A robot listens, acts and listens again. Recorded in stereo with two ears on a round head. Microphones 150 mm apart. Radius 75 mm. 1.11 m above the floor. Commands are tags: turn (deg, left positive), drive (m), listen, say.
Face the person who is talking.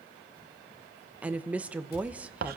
<turn deg="-30"/>
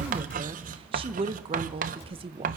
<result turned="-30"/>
<turn deg="-140"/>
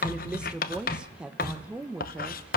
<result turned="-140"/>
<say>Found it: a woman speaking, straight ahead, 1 to 2 m away.</say>